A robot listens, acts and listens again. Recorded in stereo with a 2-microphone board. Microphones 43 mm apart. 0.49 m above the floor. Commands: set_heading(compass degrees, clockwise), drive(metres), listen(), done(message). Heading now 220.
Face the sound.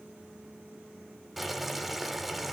set_heading(250)
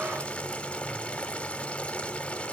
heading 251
set_heading(226)
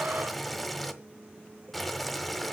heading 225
done("Found it: boiling, straight ahead, 1 to 2 m away.")